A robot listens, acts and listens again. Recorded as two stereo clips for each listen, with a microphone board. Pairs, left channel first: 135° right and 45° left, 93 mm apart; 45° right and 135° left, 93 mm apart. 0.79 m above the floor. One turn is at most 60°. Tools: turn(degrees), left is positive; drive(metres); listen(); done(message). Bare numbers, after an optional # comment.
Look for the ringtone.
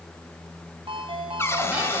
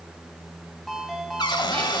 # The ringtone: 45° left.
turn(45)
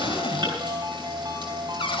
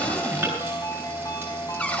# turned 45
done("Found it: a ringtone, straight ahead.")